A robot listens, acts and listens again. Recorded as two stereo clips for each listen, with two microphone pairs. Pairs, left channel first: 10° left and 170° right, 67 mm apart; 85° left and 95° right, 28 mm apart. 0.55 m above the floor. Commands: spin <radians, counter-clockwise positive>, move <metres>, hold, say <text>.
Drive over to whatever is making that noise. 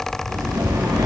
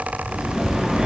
spin -2.79
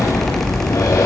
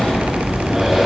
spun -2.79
spin -0.44
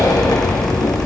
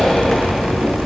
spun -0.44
move 1.0
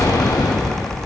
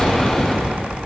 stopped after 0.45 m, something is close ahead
spin 0.17
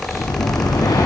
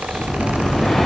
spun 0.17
say Something is in my way. I am facing the breathing but have not reached it.